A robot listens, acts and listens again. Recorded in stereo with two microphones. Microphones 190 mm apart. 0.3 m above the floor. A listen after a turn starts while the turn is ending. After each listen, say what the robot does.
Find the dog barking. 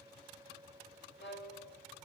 Keep listening.
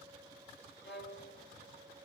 Keep listening.
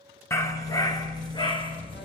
Turn 25° left.
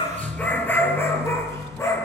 Turn 30° left.
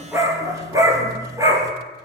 Turn 15° right.
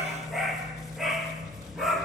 Facing the dog barking.